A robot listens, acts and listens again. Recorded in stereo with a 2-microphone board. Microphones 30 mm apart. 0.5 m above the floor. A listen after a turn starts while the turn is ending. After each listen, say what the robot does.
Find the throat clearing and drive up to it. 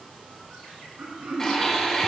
Turn 90° right.
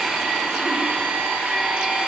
Keep listening.
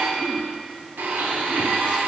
Keep listening.
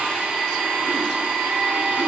Facing where the throat clearing came from. I can't hear it now. I did not reach it.